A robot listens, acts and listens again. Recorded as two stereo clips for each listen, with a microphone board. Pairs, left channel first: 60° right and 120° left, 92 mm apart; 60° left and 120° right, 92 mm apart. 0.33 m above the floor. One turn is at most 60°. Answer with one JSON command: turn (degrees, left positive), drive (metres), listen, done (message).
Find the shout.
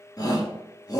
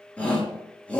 {"turn": -15}
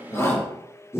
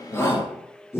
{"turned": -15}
{"done": "Facing the shout."}